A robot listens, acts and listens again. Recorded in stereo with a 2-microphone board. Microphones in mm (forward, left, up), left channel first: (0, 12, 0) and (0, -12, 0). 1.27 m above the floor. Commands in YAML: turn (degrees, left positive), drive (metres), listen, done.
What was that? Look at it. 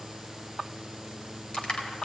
turn: 40
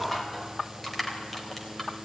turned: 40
done: "Facing the crushing, 2 to 4 m away."